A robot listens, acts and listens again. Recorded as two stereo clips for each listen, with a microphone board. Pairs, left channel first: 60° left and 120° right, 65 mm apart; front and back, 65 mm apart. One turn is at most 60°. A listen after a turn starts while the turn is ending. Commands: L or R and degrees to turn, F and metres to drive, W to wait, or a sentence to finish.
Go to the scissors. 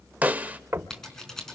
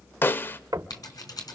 R25
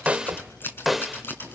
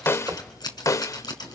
F1.0
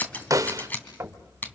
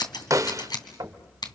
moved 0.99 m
F1.0
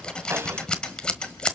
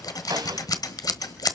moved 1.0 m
R15
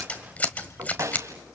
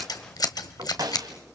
F1.0
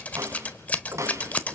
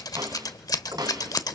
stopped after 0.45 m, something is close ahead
I am next to the scissors.